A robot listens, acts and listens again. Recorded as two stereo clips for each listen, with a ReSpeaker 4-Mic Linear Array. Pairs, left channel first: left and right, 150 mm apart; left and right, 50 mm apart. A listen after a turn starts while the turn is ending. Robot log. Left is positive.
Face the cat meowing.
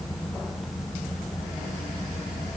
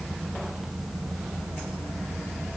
cmd idle
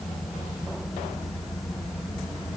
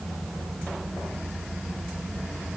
cmd idle
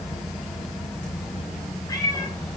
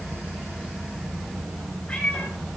note: The cat meowing: about 25° left or 155° left.
cmd yaw +25
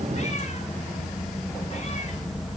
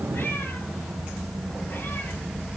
cmd idle
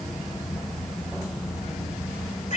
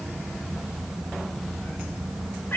note: So it is at 130° left.
cmd yaw +130
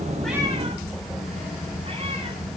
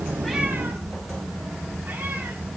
cmd idle
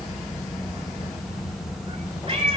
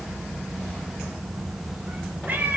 note: The cat meowing is now 35° right.
cmd yaw -35
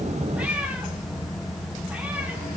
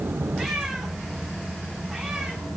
end: Facing the cat meowing.